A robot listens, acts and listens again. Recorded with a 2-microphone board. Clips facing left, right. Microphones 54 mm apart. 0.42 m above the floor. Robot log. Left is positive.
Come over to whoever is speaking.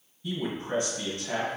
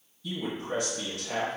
note: The man speaking: about 30° left or 150° left.
cmd yaw +30
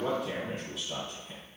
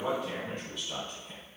cmd fwd 1.0
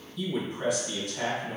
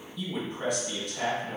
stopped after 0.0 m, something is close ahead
end: Something is in my way. I am facing the man speaking but have not reached it.